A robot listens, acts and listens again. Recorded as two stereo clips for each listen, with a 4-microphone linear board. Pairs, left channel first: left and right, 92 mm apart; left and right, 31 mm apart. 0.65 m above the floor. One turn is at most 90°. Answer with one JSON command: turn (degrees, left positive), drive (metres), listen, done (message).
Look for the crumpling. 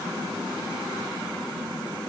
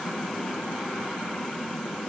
{"listen": true}
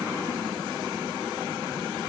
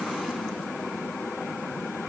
{"listen": true}
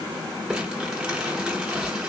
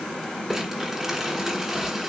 {"turn": -30}
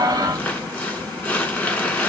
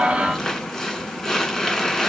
{"turn": 20}
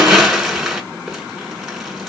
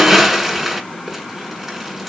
{"done": "Found it: crumpling, straight ahead, 2 to 4 m away."}